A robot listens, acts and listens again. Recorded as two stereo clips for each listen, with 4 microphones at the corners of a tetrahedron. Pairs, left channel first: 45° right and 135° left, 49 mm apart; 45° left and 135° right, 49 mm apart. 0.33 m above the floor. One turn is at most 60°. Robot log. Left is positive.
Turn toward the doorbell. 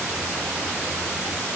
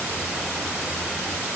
cmd idle
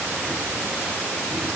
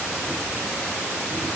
cmd idle
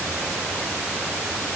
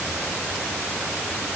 end: I can't make out a doorbell to turn to.